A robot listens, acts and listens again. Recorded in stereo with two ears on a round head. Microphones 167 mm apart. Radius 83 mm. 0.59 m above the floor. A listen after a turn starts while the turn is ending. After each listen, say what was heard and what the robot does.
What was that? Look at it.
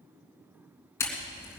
Turn 30° left.
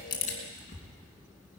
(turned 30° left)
So it is at 135° left. Turn 135° left.
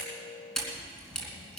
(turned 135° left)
Facing the camera shutter, 2 to 4 m away.